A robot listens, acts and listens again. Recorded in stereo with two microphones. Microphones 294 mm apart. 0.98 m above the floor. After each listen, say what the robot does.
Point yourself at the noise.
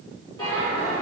Turn 15° left.
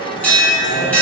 Found it: a bell, straight ahead.